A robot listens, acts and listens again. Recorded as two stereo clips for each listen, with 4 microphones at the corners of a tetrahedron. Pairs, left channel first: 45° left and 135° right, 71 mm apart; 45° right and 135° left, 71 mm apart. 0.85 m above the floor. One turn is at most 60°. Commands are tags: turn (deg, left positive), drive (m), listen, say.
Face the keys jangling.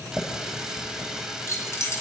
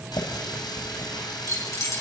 <say>Found it: keys jangling, straight ahead, over 4 m away.</say>